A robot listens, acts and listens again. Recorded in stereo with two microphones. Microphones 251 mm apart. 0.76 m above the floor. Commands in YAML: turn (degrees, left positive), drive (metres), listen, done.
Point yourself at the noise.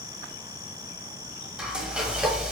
turn: -30
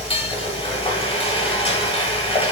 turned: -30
turn: 30
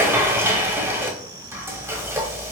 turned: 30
turn: -10
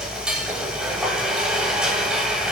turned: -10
done: "Facing the frying."